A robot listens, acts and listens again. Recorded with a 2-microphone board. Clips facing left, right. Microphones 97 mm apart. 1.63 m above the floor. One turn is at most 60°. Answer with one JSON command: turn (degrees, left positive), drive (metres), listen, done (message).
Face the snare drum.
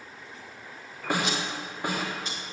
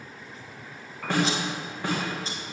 {"turn": 30}
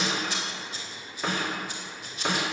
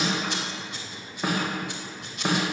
{"turn": -15}
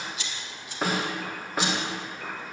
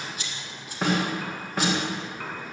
{"done": "Found it: a snare drum, straight ahead, 2 to 4 m away."}